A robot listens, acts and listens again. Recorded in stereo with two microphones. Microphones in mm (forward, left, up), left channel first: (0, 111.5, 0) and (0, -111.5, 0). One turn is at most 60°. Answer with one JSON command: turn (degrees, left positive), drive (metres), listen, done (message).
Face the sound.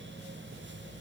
{"listen": true}
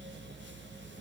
{"listen": true}
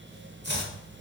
{"turn": -50}
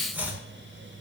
{"turn": -10}
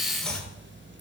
{"done": "Facing the chopping."}